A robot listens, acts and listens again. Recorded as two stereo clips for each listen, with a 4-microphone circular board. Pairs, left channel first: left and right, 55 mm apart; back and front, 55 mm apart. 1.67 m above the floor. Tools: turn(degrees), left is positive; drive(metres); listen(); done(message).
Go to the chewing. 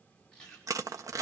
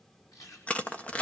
turn(degrees=165)
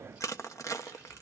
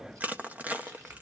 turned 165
listen()
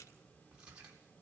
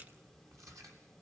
turn(degrees=-20)
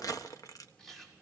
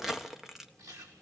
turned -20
drive(metres=1.0)
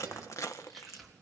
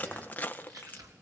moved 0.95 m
drive(metres=1.0)
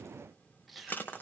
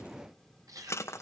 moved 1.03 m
drive(metres=1.0)
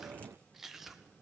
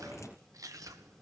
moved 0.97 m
turn(degrees=-10)
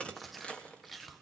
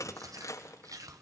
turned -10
drive(metres=1.0)
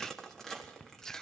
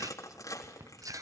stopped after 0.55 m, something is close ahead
done("I am next to the chewing.")